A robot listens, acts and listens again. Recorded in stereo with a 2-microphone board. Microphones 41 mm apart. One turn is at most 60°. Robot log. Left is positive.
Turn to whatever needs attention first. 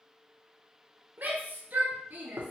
note: The shout: about 45° right or 135° right.
cmd yaw -45
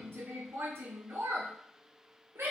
note: So it is at 85° right.
cmd yaw -60
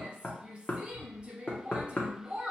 note: The shout is now 25° right.
cmd yaw -25
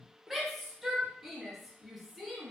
end: Found it: a shout, straight ahead, under 1 m away.